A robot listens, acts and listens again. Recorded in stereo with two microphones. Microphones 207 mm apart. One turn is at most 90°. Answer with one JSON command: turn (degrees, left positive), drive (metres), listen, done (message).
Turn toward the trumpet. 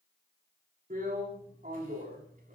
{"listen": true}
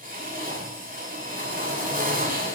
{"listen": true}
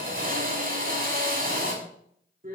{"done": "I can't make out a trumpet, only a drill."}